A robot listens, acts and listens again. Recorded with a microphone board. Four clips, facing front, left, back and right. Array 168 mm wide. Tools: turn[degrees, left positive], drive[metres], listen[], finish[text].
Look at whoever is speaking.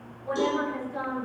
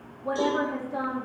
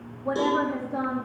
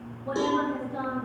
Thought: The woman speaking: 145° left.
Action: turn[145]
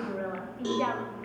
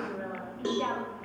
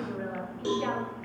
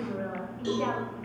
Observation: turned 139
Action: finish[Found it: a woman speaking, straight ahead.]